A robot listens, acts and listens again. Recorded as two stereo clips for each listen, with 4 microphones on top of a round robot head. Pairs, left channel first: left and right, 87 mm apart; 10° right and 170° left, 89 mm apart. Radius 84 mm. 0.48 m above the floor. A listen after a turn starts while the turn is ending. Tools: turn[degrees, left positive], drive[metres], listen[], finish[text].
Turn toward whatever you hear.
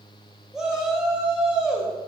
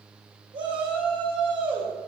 Thought: The shout: 175° right.
Action: turn[-175]
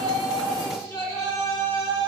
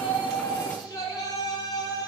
Thought: The shout is now 35° left.
Action: turn[35]
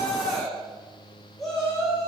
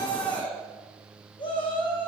Action: finish[Found it: a shout, straight ahead.]